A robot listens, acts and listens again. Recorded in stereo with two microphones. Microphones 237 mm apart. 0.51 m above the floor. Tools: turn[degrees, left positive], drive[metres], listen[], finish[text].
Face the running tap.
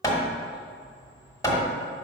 Action: listen[]
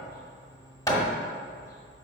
Action: listen[]
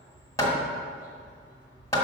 Action: finish[I can't make out a running tap, only hammering.]